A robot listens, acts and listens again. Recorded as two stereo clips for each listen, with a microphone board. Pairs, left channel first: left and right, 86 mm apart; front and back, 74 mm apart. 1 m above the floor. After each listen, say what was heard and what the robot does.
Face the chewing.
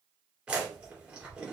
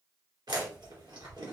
The chewing: 170° right. Turn 170° right.
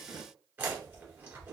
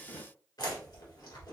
The chewing is now 25° right. Turn 25° right.
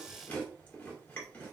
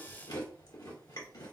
The chewing is now 20° left. Turn 20° left.
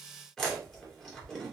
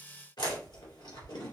Found it: chewing, straight ahead, 1 to 2 m away.